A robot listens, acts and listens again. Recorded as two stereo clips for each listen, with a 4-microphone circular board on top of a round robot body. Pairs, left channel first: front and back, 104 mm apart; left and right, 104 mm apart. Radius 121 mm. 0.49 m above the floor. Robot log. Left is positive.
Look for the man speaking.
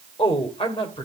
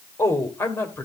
note: The man speaking: 25° left.
cmd yaw +25
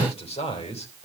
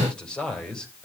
note: The man speaking is now 10° left.
cmd yaw +10
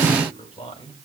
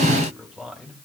end: Found it: a man speaking, straight ahead, over 4 m away.